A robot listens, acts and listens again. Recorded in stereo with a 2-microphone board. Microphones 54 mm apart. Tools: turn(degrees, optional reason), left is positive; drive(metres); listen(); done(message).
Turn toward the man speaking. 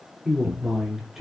turn(degrees=-30)
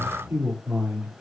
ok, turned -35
turn(degrees=-145, reason="So it is at 145° right.")
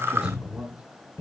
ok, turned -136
turn(degrees=-15, reason="The man speaking is now 15° right.")
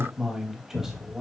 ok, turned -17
turn(degrees=-10, reason="The man speaking is now 10° right.")
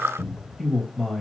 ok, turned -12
done("Found it: a man speaking, straight ahead, 2 to 4 m away.")